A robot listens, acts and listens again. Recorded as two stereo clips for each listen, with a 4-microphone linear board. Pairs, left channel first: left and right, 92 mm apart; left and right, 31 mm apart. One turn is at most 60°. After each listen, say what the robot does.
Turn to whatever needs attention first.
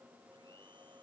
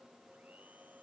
Keep listening.
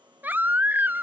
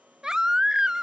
Turn 20° right.
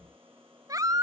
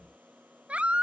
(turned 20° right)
Turn 60° right.
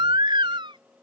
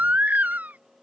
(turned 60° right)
Turn 60° right.
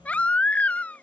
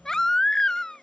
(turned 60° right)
Turn 15° left.
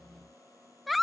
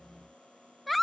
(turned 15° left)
Facing the baby crying.